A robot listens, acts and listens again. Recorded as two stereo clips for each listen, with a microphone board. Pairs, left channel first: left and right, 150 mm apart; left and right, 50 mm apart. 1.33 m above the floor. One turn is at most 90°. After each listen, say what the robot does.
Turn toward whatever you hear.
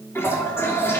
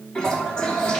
Turn 15° left.
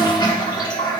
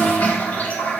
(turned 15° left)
Turn 90° left.
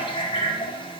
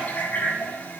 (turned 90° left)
Turn 40° left.
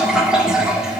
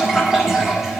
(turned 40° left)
Found it: a toilet flushing, straight ahead, 1 to 2 m away.